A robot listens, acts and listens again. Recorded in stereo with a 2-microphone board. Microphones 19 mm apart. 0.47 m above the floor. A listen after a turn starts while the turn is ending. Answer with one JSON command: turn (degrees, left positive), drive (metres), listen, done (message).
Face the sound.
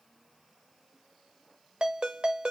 {"turn": -60}
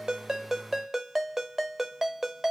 {"turn": -15}
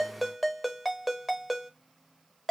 {"done": "Facing the ringtone, 1 to 2 m away."}